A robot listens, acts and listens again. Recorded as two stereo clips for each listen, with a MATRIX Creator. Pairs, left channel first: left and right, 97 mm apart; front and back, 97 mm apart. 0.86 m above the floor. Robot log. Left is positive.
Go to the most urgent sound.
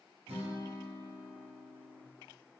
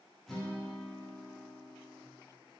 cmd idle
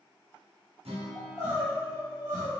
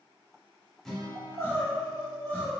note: The crying: 65° left.
cmd yaw +65
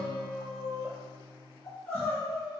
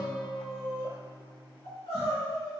note: The crying is now 15° left.
cmd yaw +15
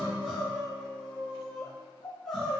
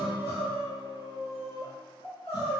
cmd fwd 1.0
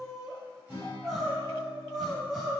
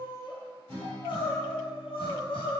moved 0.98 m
cmd fwd 1.0
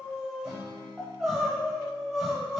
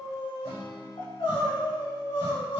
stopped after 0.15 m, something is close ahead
end: Arrived at the crying, straight ahead.